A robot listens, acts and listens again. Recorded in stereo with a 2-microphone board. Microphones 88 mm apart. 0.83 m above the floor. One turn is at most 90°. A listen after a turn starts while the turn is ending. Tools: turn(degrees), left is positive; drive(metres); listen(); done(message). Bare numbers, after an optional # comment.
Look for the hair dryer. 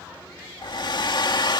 # The hair dryer: about 55° left or 125° left.
turn(55)
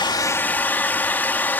# So it is at 25° left.
turn(25)
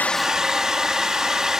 done("Facing the hair dryer.")